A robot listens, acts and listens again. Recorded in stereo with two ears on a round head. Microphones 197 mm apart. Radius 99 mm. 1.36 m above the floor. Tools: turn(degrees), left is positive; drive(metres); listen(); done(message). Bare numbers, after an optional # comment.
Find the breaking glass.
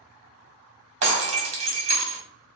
# The breaking glass: about 30° right or 150° right.
turn(-30)
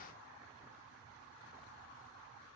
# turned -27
listen()
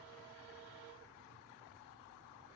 done("I heard breaking glass, but can't make it out now. It was about 5° right or 125° right.")